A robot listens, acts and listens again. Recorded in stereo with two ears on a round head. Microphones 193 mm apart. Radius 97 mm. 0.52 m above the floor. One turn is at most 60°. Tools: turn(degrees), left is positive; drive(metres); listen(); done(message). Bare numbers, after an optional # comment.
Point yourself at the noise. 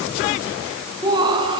# The laughter: about 20° right or 160° right.
turn(-20)
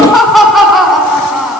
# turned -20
turn(30)
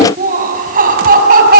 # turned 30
# So it is at 40° right.
turn(-40)
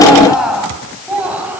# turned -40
done("Facing the laughter.")